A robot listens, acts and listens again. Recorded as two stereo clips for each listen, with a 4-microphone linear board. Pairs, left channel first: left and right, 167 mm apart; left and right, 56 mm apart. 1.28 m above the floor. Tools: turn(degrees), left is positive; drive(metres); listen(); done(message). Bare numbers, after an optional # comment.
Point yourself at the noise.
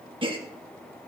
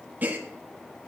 # The gasp: about 30° right or 150° right.
turn(-30)
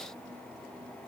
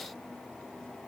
listen()
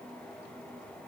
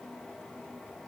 done("I heard a gasp, but can't make it out now. It was about straight ahead or 120° right.")